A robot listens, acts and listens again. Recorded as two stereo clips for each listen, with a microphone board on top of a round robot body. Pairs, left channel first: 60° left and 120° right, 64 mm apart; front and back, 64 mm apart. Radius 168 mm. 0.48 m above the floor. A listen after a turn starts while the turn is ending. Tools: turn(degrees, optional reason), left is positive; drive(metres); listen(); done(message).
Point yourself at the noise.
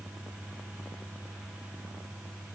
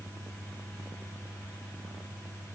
listen()
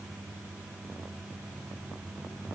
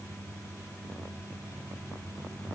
listen()
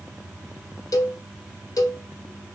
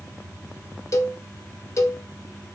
turn(degrees=40, reason="The cowbell: 40° left.")
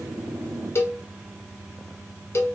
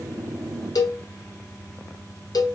turn(degrees=10, reason="The cowbell is now 10° left.")
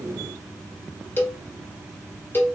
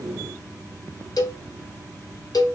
done("Found it: a cowbell, straight ahead.")